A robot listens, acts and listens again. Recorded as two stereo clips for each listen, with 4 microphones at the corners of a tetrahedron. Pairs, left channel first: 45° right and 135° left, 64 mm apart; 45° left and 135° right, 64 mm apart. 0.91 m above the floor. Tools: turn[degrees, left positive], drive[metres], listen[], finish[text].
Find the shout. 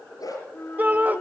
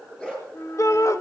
Thought: The shout: 75° left.
Action: turn[75]
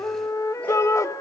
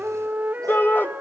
Thought: The shout is now 10° right.
Action: turn[-10]
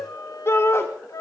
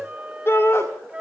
Action: finish[Facing the shout.]